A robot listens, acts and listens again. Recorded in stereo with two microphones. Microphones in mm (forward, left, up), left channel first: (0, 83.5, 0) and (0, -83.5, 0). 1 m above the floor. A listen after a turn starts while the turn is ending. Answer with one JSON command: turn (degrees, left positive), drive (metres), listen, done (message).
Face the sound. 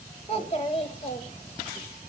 {"turn": 40}
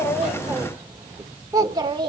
{"turn": -25}
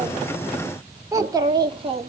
{"turn": -35}
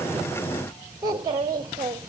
{"turn": -20}
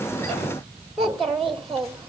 {"done": "Found it: a child speaking, straight ahead."}